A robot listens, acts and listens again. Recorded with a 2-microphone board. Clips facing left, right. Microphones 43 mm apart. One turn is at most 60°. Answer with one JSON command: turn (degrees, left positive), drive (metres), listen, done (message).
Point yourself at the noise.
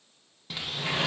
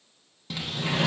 {"turn": 30}
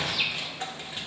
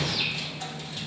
{"turn": 60}
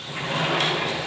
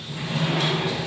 {"turn": 60}
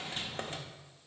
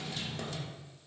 {"turn": 40}
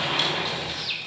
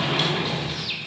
{"done": "Found it: a sliding door, straight ahead."}